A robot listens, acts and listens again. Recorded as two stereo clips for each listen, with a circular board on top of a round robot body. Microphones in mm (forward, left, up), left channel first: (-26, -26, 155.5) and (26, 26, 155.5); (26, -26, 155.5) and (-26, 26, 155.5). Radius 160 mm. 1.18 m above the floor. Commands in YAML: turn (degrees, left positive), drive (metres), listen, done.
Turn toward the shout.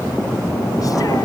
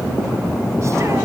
listen: true
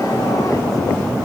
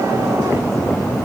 listen: true
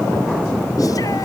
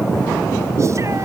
done: "I can't make out a shout to turn to."